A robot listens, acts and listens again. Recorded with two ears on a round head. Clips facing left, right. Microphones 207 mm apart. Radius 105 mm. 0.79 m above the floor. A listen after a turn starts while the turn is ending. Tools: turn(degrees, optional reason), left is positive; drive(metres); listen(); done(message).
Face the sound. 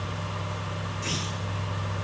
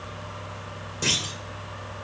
turn(degrees=-90)
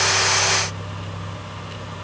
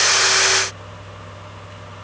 done("I heard a clunk from this way, but can't make it out now.")